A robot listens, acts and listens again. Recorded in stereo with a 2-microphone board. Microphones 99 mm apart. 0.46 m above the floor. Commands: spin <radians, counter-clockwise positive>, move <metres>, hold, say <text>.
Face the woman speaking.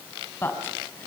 spin 0.44
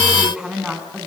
say Facing the woman speaking, over 4 m away.